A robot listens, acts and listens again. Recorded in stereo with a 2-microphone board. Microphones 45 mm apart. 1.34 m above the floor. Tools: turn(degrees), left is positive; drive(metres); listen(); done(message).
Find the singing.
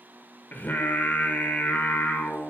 turn(degrees=45)
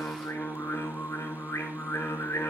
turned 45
turn(degrees=95)
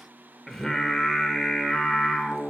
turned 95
done("Found it: singing, straight ahead, 1 to 2 m away.")